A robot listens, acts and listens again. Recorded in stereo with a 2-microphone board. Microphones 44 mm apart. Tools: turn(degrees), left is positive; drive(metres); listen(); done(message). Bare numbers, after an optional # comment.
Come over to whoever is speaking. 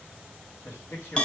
# The man speaking: about 65° left or 115° left.
turn(65)
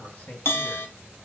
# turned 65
# So it is at 30° left.
turn(30)
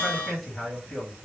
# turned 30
drive(1.0)
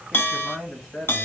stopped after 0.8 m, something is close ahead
done("Arrived at the man speaking, straight ahead.")